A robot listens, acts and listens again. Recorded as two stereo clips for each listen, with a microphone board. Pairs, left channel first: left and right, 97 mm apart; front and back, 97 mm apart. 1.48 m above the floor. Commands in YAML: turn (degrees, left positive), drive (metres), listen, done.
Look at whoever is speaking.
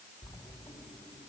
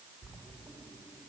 listen: true
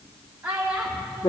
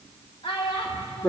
turn: -15
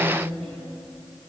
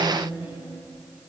listen: true
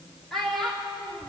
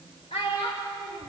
done: "Facing the child speaking, 2 to 4 m away."